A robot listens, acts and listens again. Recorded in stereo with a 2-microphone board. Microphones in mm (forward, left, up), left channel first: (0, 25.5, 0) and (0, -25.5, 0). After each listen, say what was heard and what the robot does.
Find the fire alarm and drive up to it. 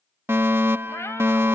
The fire alarm: about 55° right or 125° right. Turn 55° right.
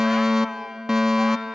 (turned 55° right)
So it is at 15° right. Turn 15° right.
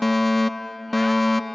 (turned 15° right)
Drive 1.0 m forward.
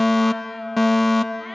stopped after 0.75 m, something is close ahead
Arrived at the fire alarm, straight ahead.